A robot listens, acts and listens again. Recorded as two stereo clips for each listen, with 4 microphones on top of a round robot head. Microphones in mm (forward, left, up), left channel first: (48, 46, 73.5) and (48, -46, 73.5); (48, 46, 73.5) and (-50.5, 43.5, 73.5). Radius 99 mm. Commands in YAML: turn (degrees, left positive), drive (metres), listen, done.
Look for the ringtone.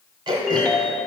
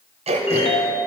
done: "Found it: a ringtone, straight ahead, 1 to 2 m away."